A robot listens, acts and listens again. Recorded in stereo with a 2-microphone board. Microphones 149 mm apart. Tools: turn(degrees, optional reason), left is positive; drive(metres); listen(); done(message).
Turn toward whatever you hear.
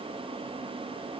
listen()
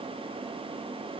listen()
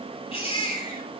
turn(degrees=40, reason="The baby crying: about 40° left or 140° left.")
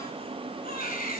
turn(degrees=100, reason="So it is at 100° left.")
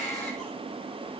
done("Found it: a baby crying, straight ahead, over 4 m away.")